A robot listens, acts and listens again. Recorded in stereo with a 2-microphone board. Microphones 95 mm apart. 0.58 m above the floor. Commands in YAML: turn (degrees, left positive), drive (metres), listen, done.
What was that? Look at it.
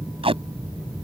turn: -90
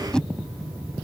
turn: 10
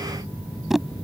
done: "Facing the tape being pulled."